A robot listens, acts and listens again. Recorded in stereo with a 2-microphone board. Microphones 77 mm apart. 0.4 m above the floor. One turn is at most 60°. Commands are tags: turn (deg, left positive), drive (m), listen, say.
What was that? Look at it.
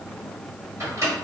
<turn deg="-40"/>
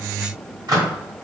<turn deg="-60"/>
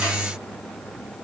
<turn deg="-30"/>
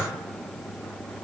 <listen/>
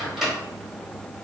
<say>Found it: a microwave, straight ahead.</say>